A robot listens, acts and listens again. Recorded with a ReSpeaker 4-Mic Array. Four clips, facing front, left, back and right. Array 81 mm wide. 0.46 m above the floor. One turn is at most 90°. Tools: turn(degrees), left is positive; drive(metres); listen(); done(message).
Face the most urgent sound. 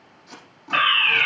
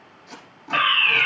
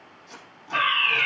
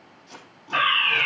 turn(degrees=15)
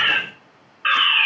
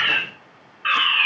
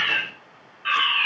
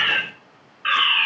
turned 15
done("Facing the fire alarm, 2 to 4 m away.")